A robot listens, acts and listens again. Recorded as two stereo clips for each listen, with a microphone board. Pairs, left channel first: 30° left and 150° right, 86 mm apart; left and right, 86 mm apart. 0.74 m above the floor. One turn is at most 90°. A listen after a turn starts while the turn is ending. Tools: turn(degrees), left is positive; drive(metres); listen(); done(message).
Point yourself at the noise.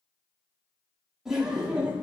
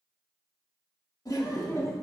turn(degrees=90)
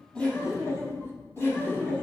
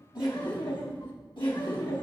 turn(degrees=90)
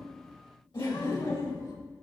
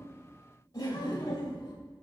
turn(degrees=50)
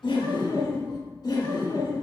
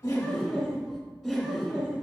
turn(degrees=-10)
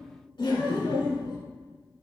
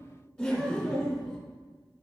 done("Found it: laughter, straight ahead, 2 to 4 m away.")